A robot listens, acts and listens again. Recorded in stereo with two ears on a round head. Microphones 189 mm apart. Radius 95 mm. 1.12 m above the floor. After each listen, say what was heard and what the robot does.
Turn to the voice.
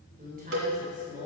The woman speaking: about 40° right or 140° right. Turn 40° right.
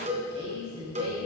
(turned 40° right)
So it is at 105° right. Turn 105° right.
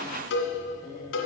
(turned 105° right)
Keep listening.
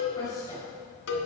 The woman speaking is now 15° left. Turn 15° left.
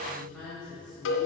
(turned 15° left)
Facing the woman speaking.